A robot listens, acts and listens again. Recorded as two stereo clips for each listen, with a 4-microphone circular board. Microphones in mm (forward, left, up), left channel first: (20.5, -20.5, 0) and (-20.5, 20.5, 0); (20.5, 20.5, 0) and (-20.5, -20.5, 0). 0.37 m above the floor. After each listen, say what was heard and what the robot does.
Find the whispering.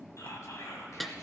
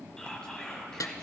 The whispering: 30° right. Turn 30° right.
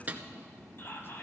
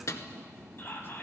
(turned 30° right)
Found it: whispering, straight ahead.